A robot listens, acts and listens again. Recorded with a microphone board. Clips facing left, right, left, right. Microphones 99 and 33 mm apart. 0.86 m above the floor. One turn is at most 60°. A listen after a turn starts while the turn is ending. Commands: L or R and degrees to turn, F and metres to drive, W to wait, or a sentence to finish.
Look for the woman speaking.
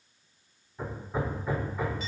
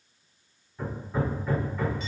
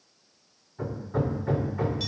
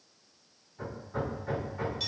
W
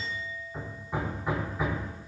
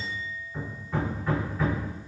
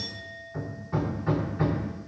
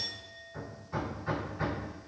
W
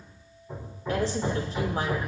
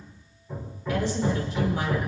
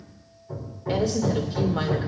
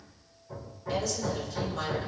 L35
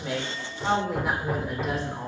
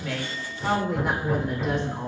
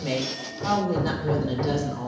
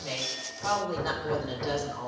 Found it: a woman speaking, straight ahead, 2 to 4 m away.